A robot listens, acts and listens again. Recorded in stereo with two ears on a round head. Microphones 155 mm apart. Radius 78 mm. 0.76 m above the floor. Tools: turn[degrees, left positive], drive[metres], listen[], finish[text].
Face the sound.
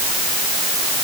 Action: listen[]
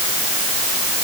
Action: listen[]
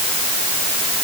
Action: finish[I can't make out anything to turn to.]